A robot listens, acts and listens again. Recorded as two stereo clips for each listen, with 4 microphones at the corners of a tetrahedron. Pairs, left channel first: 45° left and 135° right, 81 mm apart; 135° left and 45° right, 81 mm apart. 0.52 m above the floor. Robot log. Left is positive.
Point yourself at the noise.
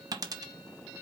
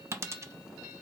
note: The dropped coin: 95° right.
cmd yaw -95
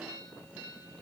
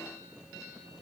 end: Facing where the dropped coin came from. I can't hear it now.